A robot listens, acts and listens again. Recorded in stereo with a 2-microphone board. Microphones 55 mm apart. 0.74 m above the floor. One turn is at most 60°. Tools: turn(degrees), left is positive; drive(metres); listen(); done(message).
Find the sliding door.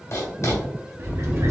turn(degrees=-55)
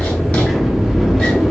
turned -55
done("Found it: a sliding door, straight ahead, under 1 m away.")